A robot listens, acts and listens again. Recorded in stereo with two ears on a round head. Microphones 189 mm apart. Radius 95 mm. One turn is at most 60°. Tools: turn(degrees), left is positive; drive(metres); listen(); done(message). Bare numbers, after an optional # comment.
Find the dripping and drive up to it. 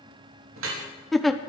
turn(-60)
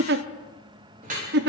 # So it is at 40° right.
turn(-40)
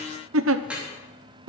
drive(1.0)
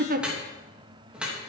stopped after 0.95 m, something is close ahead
done("Blocked. The dripping is further on, straight ahead.")